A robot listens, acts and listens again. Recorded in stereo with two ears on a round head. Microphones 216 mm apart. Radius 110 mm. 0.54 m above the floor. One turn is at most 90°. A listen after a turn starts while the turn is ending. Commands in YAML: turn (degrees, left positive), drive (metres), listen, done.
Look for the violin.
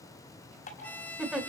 turn: 30
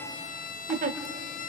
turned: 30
turn: 90
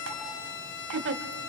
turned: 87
turn: 50
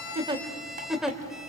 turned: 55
done: "Found it: a violin, straight ahead, 1 to 2 m away."